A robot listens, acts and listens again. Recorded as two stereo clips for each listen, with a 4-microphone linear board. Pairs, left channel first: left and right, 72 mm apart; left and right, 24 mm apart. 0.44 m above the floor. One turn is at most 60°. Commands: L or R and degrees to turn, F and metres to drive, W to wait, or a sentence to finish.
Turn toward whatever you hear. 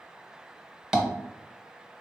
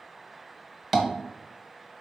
R30
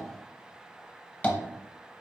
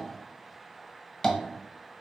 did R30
L25
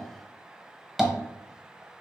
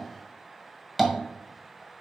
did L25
Facing the tapping, under 1 m away.